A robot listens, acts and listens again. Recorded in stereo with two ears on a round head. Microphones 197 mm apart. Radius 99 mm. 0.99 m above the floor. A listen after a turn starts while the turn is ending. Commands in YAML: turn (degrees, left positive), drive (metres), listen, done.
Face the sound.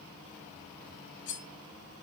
turn: 60
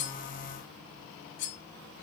turn: 60
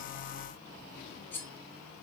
turn: 10
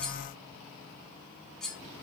done: "Facing the cutlery clinking."